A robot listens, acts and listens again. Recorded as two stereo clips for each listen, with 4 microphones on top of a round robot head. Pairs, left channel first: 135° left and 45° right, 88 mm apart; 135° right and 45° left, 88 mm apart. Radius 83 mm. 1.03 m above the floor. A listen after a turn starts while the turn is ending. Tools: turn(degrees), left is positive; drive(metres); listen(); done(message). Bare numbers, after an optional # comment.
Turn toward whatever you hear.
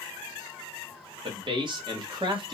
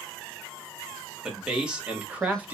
# The man speaking: 25° right.
turn(-25)
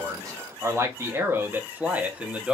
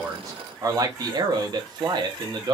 # The man speaking is now 30° left.
turn(30)
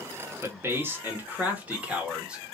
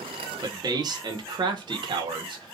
# The man speaking is now 35° left.
turn(35)
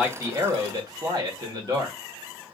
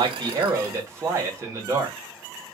# The man speaking is now 10° right.
turn(-10)
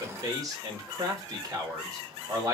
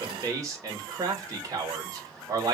done("Found it: a man speaking, straight ahead, 1 to 2 m away.")